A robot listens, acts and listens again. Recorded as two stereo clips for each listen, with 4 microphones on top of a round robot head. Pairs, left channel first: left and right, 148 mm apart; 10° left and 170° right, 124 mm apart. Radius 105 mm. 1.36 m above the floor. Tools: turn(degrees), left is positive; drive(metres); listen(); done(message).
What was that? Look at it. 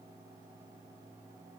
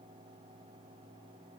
listen()
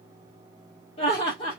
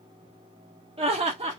turn(degrees=150)
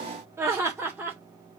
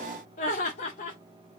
turn(degrees=-10)
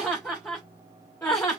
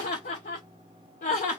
turn(degrees=15)
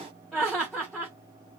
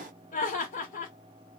done("Facing the laughter.")